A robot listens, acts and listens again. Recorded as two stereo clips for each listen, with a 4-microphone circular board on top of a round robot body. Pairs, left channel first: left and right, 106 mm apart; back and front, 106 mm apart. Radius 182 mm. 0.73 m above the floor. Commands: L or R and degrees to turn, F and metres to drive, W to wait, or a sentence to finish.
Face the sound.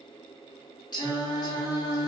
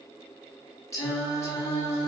L130
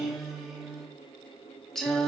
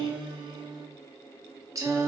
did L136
L10
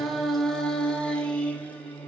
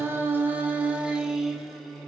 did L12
L105
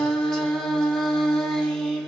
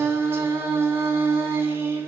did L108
L15
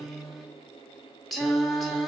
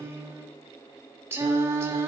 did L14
Facing the singing, 1 to 2 m away.